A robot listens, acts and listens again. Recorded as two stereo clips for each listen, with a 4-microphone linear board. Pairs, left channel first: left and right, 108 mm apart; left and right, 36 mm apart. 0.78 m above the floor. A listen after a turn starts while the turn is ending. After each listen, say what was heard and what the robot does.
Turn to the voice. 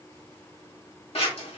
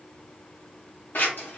Keep listening.
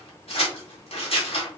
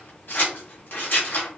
Keep listening.
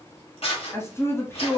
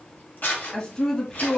The woman speaking: about 25° left or 155° left. Turn 25° left.
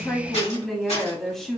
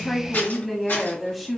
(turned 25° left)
Facing the woman speaking.